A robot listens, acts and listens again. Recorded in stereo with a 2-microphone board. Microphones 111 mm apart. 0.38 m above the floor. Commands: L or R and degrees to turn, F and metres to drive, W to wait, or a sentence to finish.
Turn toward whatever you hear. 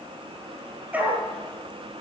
R30
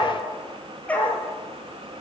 L15
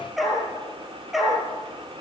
Found it: a dog barking, straight ahead, over 4 m away.